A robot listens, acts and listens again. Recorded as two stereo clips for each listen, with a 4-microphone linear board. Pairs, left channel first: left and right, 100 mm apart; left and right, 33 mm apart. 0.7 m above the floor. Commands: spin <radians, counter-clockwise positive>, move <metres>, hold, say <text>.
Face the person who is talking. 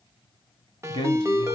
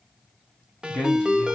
spin 0.96
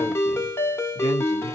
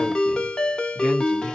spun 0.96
hold
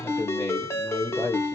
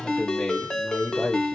spin 0.96
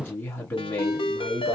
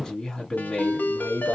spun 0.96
spin 0.35
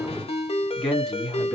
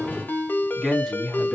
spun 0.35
say Found it: a man speaking, straight ahead, 1 to 2 m away.